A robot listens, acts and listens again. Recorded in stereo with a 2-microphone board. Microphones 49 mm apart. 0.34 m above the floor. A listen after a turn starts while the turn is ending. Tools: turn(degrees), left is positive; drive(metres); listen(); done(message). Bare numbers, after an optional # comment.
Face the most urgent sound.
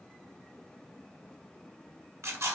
listen()
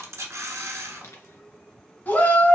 # The shout: about 40° left or 140° left.
turn(40)
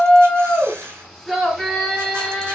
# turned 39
# So it is at 10° left.
turn(10)
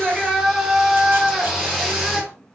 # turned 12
done("Facing the shout, 2 to 4 m away.")